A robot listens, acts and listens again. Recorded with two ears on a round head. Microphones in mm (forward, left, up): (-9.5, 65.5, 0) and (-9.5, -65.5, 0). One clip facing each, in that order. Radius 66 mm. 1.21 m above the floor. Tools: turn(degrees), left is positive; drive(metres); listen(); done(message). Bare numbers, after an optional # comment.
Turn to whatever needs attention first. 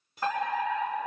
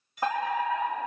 # The fire alarm: about 15° right or 165° right.
turn(-15)
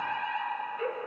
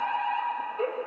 # So it is at 155° right.
turn(-155)
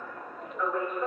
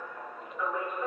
done("Found it: a fire alarm, straight ahead, 2 to 4 m away.")